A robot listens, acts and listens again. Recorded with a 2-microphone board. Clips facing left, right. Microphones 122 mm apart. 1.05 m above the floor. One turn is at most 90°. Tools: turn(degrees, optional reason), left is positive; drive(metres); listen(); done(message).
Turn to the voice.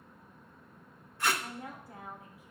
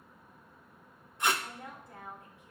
turn(degrees=30)
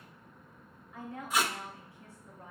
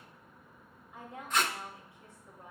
turn(degrees=-20, reason="So it is at 20° right.")
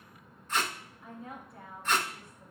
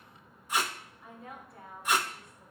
done("Found it: a woman speaking, straight ahead.")